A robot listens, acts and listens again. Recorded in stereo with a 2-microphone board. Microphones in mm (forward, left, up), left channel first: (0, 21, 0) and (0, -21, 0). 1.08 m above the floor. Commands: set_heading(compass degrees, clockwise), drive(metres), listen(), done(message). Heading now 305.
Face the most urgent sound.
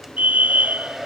set_heading(345)
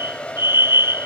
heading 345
set_heading(80)
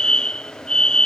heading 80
set_heading(60)
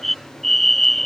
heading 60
done("Found it: a fire alarm, straight ahead.")